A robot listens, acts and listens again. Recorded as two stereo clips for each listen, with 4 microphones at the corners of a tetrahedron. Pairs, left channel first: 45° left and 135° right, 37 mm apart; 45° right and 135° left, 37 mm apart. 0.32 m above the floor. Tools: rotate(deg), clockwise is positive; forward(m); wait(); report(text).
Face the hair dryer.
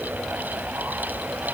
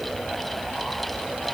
wait()
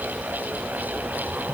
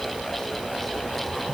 wait()
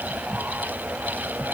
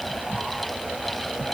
report("I can't make out a hair dryer to turn to.")